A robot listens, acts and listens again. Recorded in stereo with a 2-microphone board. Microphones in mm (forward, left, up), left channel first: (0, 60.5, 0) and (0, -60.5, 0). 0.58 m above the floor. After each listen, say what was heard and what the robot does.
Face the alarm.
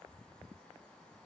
Keep listening.
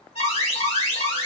The alarm: about 60° left or 120° left. Turn 60° left.
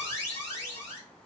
So it is at 25° left. Turn 25° left.
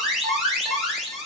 Found it: an alarm, straight ahead, 1 to 2 m away.